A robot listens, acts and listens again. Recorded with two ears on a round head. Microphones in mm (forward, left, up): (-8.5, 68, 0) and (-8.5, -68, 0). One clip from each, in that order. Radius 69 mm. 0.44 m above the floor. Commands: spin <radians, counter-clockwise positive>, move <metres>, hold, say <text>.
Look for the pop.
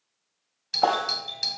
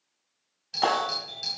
spin 0.61
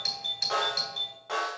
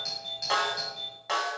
hold
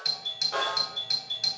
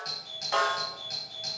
say I heard a pop, but can't make it out now. It was about straight ahead or 110° left.